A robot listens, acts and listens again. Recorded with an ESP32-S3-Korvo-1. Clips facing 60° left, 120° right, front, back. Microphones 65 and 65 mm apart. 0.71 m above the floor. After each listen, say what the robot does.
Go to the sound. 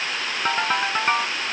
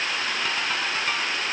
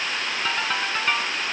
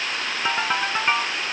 Turn 110° left.
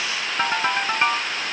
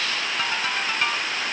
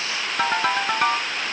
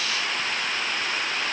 Drive 1.0 m forward.
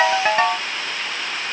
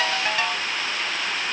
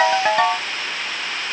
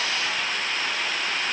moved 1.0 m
Turn 10° left.
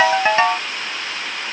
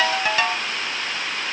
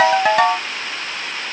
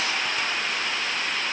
Drive 1.0 m forward.
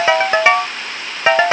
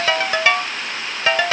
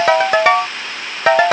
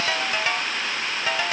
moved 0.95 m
Drive 1.0 m forward.
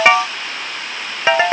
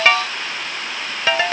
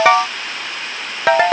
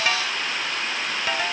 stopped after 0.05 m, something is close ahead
Arrived at the ringtone, straight ahead.